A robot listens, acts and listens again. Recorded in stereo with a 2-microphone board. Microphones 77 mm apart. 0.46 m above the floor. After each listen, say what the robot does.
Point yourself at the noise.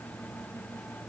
Keep listening.
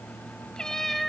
Turn 30° left.
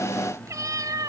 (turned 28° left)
Turn 55° right.
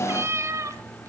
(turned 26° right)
Turn 40° right.
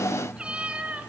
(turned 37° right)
Turn 15° right.
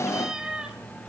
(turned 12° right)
Turn 10° right.
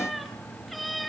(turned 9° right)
Facing the cat meowing, 2 to 4 m away.